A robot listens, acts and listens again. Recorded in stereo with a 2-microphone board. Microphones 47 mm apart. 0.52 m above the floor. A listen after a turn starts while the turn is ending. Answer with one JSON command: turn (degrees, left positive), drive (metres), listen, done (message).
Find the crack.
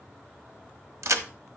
{"turn": -90}
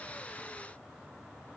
{"done": "I heard a crack from this way, but can't make it out now."}